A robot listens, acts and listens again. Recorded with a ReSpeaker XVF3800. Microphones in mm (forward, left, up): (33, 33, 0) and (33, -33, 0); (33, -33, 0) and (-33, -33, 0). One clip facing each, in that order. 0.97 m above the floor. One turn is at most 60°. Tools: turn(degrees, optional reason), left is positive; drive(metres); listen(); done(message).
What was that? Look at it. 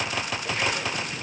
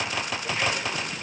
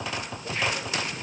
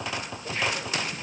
listen()
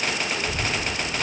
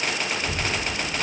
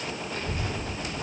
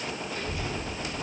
turn(degrees=-45, reason="The child speaking: 45° right.")
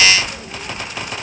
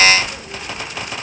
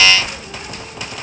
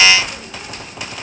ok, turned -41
done("Found it: a child speaking, straight ahead.")